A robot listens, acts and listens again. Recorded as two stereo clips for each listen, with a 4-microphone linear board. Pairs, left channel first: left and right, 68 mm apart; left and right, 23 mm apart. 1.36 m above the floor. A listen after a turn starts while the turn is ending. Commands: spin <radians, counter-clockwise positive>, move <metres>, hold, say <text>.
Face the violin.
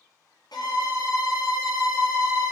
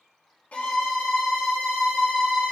spin 1.57
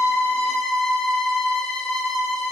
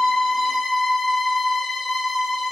say Facing the violin, under 1 m away.